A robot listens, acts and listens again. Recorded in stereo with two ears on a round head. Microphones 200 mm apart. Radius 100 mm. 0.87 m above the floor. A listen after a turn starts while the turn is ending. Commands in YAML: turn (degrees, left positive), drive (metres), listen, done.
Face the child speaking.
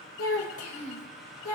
turn: 90
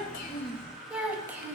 turn: -10
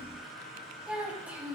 turn: -10
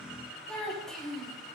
done: "Facing the child speaking, over 4 m away."